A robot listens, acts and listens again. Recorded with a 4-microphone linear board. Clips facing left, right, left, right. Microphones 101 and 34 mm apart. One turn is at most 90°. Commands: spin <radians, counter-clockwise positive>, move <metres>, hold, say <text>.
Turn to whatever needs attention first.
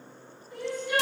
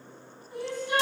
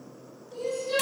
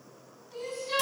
spin -0.44
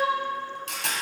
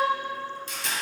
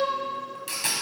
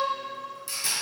hold
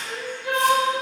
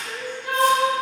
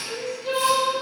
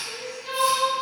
say Facing the crying.